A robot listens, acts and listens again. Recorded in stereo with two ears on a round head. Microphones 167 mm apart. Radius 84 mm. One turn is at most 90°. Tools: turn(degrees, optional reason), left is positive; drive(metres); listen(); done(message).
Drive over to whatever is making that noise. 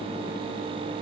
listen()
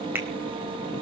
turn(degrees=-30)
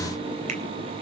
listen()
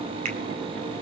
listen()
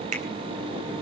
turn(degrees=-90, reason="So it is at 140° right.")
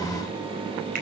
turn(degrees=-50, reason="Nothing new. It was at 50° right.")
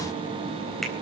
listen()
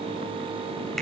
done("I heard a finger snap from this way, but can't make it out now. I did not reach it.")